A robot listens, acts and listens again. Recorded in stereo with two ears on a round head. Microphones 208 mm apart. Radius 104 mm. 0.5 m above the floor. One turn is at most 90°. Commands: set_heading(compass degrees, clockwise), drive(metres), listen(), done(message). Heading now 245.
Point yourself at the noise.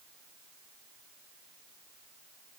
listen()
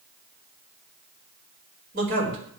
set_heading(290)
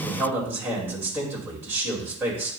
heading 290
set_heading(300)
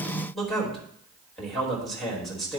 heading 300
done("Found it: a man speaking, straight ahead, 2 to 4 m away.")